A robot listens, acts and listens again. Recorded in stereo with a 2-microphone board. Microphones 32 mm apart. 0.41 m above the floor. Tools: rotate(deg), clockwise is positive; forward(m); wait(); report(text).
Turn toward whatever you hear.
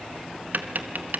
rotate(60)
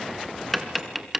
report("Found it: tapping, straight ahead, 1 to 2 m away.")